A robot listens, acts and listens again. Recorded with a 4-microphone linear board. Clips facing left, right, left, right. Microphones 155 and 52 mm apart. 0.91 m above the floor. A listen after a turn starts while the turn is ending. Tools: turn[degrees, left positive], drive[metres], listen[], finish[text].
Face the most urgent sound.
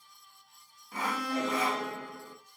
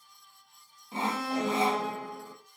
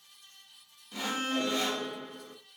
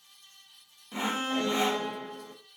Thought: The alarm: about 20° right or 160° right.
Action: turn[-20]
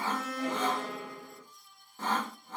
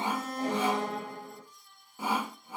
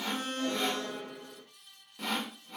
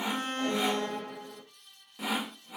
Thought: So it is at 140° right.
Action: turn[-140]
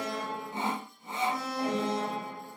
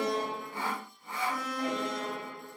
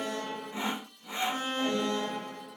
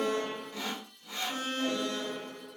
Thought: The alarm is now 25° left.
Action: turn[25]
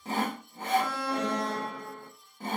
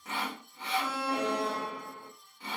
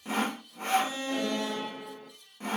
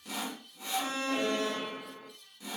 Thought: The alarm is now 10° right.
Action: turn[-10]
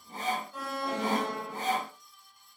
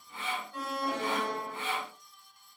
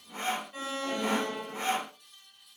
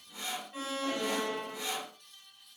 Action: finish[Found it: an alarm, straight ahead.]